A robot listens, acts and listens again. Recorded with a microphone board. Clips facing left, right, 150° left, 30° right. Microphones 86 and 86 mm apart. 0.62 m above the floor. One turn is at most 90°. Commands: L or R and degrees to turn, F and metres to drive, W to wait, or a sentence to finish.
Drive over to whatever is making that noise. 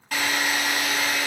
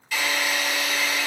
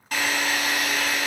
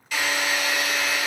L90
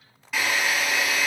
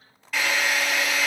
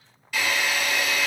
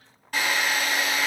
F1.0
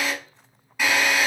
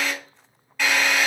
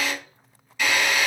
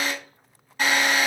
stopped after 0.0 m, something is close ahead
L10
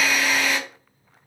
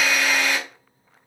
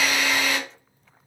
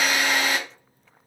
Blocked. The drill is further on, straight ahead.